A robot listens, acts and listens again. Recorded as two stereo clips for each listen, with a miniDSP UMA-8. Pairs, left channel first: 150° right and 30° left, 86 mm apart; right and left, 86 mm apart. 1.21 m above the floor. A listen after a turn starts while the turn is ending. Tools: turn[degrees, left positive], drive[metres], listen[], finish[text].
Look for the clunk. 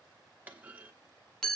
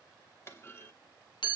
Thought: The clunk: 35° right.
Action: turn[-35]
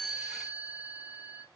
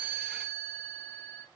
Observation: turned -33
Action: finish[I heard a clunk from this way, but can't make it out now.]